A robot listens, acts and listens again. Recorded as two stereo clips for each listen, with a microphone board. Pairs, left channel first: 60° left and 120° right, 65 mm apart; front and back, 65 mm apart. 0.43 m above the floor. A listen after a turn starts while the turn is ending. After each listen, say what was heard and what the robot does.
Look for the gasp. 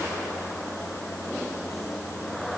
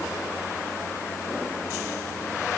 Keep listening.
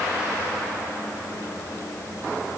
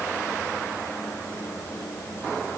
Keep listening.
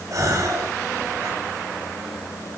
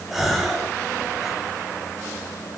The gasp: 95° right. Turn 95° right.
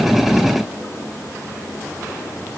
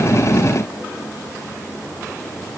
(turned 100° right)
I heard a gasp from this way, but can't make it out now.